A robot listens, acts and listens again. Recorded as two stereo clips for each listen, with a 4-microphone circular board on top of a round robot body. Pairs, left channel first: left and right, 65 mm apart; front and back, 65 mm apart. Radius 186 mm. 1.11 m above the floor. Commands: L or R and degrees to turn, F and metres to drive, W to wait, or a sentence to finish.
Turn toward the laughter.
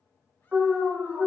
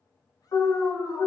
W
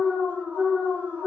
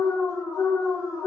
W
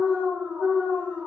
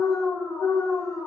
I can't make out laughter to turn to.